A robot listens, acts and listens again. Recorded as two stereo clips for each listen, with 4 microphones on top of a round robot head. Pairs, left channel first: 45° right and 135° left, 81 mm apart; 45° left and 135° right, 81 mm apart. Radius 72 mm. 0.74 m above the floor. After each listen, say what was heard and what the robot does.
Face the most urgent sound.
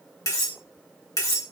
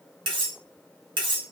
Keep listening.
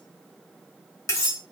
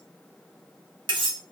Keep listening.
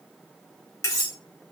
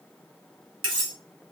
I can't make out anything urgent, only cutlery clinking.